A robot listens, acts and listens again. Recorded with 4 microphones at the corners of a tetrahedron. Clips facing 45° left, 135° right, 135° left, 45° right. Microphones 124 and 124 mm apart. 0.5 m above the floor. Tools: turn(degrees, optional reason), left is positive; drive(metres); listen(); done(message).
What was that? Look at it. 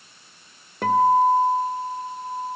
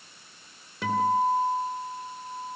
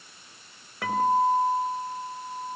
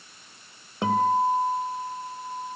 turn(degrees=15, reason="The guitar: 15° left.")
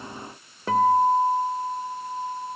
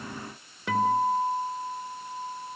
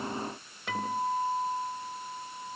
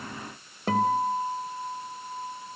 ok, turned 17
done("Found it: a guitar, straight ahead.")